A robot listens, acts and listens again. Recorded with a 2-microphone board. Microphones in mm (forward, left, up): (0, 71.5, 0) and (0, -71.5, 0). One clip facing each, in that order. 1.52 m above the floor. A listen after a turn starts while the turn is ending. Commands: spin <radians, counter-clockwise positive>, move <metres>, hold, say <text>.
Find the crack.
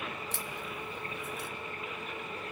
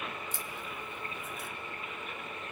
spin 1.22
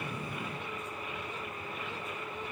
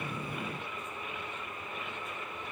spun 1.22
hold
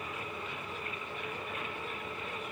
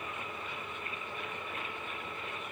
say I heard a crack, but can't make it out now. It was about straight ahead or 40° left.